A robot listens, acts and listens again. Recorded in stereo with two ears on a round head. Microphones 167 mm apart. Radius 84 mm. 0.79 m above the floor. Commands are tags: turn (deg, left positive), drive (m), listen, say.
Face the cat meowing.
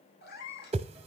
<turn deg="60"/>
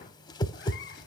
<listen/>
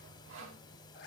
<turn deg="55"/>
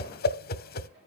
<listen/>
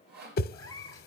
<turn deg="20"/>
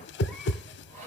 <listen/>
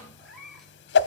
<say>Found it: a cat meowing, straight ahead.</say>